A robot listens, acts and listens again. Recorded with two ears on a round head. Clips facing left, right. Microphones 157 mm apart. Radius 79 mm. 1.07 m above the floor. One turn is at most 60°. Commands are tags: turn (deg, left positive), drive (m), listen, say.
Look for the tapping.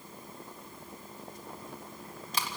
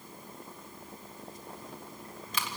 <listen/>
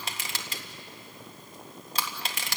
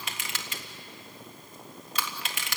<listen/>
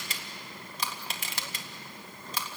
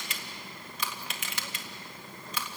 <say>I can't make out tapping, only crushing.</say>